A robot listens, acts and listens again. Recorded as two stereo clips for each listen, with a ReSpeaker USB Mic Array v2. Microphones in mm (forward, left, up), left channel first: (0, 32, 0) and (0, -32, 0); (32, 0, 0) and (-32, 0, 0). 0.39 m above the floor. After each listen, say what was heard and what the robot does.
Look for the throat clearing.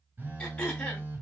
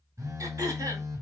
The throat clearing: 160° left. Turn 160° left.
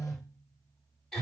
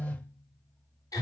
Found it: throat clearing, straight ahead, 1 to 2 m away.